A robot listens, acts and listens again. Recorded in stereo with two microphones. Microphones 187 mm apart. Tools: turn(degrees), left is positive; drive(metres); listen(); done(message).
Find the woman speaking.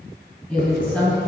turn(degrees=30)
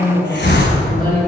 turn(degrees=130)
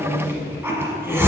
done("Found it: a woman speaking, straight ahead.")